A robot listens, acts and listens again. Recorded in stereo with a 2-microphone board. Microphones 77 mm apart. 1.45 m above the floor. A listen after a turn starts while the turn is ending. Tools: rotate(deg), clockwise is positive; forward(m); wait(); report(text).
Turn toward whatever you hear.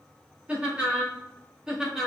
rotate(30)
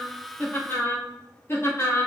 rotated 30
rotate(-45)
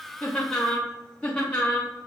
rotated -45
rotate(-25)
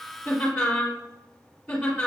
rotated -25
rotate(-10)
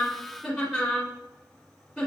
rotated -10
report("Facing the laughter, 2 to 4 m away.")